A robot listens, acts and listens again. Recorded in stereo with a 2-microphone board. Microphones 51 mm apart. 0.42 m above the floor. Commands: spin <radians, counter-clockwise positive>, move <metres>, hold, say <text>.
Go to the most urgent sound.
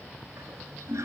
hold
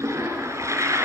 hold
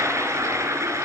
say I can't make out anything urgent, only a toilet flushing.